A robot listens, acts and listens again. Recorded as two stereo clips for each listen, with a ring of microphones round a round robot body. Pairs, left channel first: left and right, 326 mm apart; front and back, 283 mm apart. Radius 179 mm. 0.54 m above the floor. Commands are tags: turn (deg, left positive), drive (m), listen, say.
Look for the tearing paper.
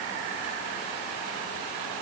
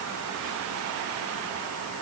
<listen/>
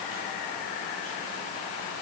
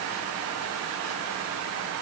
<listen/>
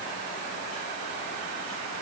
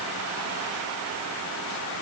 <say>I can't make out tearing paper.</say>